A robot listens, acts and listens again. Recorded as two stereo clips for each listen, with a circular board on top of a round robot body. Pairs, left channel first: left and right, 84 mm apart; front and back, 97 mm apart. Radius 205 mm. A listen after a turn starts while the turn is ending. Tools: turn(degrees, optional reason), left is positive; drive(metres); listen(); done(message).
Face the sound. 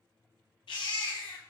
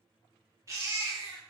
turn(degrees=120, reason="The baby crying: 120° left.")
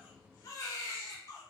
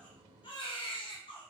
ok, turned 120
turn(degrees=35, reason="The baby crying is now 35° left.")
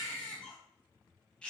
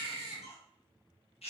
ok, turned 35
turn(degrees=10, reason="The baby crying is now 10° left.")
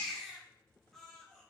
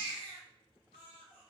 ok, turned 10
done("Facing the baby crying.")